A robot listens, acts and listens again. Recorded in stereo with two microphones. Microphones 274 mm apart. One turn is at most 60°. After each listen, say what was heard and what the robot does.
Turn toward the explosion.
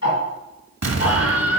The explosion: about 70° right or 110° right. Turn 60° right.
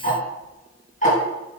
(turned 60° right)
Keep listening.
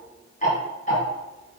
I heard an explosion, but can't make it out now. It was about 10° right or 50° right.